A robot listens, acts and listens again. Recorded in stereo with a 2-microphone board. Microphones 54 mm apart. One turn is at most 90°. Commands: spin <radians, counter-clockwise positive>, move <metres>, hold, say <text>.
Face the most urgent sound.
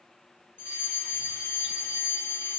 spin 0.70
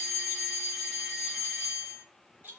say Facing the fire alarm.